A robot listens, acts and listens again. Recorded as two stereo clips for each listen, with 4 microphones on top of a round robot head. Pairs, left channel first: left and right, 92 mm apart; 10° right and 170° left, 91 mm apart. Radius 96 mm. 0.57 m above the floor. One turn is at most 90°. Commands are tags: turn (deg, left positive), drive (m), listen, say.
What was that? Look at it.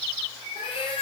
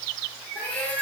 <turn deg="65"/>
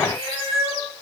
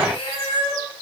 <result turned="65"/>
<turn deg="-35"/>
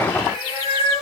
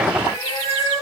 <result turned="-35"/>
<turn deg="-15"/>
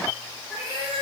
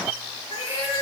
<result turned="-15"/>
<say>Facing the cat meowing.</say>